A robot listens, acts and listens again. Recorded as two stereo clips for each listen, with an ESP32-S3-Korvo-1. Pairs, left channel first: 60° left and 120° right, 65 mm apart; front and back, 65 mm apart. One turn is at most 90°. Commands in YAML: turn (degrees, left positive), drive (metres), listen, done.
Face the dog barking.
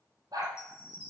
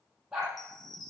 turn: -90
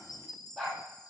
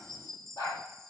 turn: -25
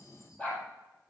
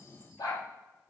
turn: -10
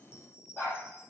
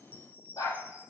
done: "Facing the dog barking."